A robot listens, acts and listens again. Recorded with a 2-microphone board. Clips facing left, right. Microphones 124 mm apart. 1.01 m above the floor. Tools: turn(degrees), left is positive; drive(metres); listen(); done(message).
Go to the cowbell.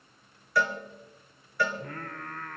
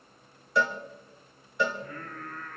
turn(degrees=-20)
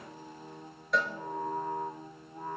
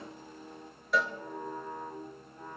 drive(metres=1.0)
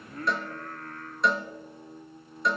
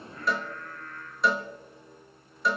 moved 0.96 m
drive(metres=1.0)
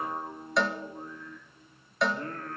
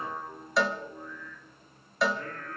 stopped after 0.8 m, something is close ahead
done("Arrived at the cowbell, straight ahead.")